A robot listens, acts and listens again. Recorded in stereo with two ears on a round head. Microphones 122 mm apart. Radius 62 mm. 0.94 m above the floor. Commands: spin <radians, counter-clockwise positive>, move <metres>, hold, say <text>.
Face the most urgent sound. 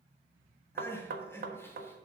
spin 0.35
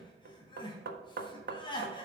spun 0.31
spin 2.53
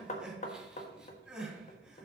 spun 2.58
say Found it: crying, straight ahead, 2 to 4 m away.